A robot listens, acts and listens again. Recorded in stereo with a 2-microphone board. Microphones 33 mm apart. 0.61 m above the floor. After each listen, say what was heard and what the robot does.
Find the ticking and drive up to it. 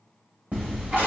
The ticking: about 30° right or 150° right. Turn 30° right.
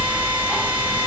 Drive 1.0 m forward.
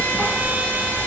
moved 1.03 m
Drive 1.0 m forward.
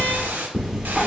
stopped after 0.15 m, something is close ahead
Arrived at the ticking, straight ahead.